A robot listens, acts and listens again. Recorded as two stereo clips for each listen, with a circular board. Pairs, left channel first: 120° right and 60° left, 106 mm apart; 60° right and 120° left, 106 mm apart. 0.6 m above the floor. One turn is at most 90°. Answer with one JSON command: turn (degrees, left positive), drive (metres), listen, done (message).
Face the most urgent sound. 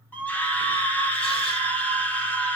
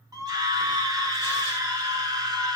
{"turn": 90}
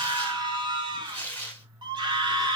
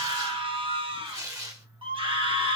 {"turn": 90}
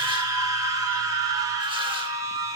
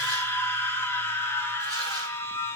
{"done": "Found it: a scream, straight ahead."}